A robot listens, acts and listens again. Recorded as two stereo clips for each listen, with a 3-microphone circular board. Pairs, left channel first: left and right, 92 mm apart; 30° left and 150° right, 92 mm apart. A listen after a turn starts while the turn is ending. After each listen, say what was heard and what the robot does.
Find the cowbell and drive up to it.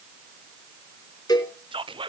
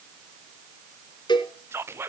The cowbell: 55° left. Turn 55° left.
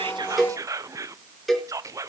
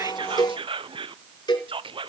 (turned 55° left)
Drive 1.0 m forward.
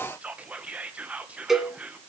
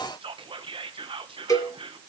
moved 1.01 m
Drive 1.0 m forward.
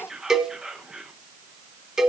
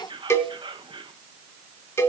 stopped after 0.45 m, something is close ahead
The cowbell is now 10° right. Turn 10° right.
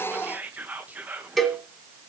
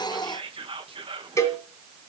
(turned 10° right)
I am next to the cowbell.